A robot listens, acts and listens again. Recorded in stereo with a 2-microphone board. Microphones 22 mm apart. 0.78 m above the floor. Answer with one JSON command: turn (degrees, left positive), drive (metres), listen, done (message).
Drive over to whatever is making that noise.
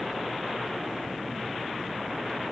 {"listen": true}
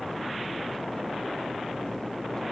{"listen": true}
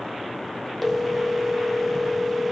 {"turn": 30}
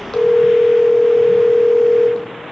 {"turn": 155}
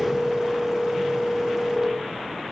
{"turn": -20}
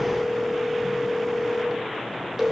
{"turn": -10}
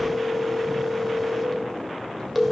{"drive": 1.0}
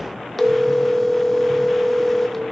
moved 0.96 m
{"turn": 10}
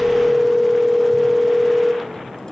{"drive": 1.0}
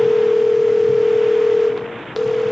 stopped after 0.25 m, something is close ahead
{"done": "Arrived at the phone ringing, straight ahead."}